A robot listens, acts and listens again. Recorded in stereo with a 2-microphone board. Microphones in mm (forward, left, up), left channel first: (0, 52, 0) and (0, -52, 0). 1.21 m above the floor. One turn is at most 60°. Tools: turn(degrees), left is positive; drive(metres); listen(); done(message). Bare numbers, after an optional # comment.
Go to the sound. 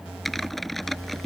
turn(30)
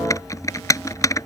# So it is at 150° left.
turn(60)
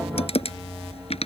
# The typing on a keyboard is now 80° left.
turn(60)
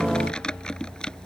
# The typing on a keyboard is now 10° left.
turn(10)
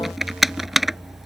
drive(1.0)
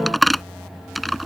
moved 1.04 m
drive(1.0)
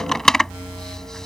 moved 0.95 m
drive(1.0)
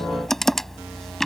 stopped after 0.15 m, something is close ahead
done("I am next to the typing on a keyboard.")